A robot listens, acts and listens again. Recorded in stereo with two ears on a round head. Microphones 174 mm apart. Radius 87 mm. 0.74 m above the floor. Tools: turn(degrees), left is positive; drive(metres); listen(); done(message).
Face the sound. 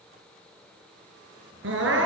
turn(degrees=-70)
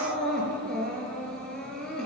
done("Found it: crying, straight ahead.")